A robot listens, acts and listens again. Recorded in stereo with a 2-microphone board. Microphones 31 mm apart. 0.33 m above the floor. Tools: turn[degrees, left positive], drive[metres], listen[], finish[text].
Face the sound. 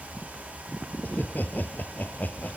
Thought: The laughter: about 60° left or 120° left.
Action: turn[60]
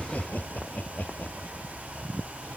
Thought: So it is at 60° left.
Action: turn[60]
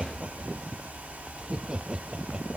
Thought: The laughter is now 30° right.
Action: turn[-30]
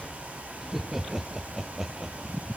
Action: finish[Facing the laughter.]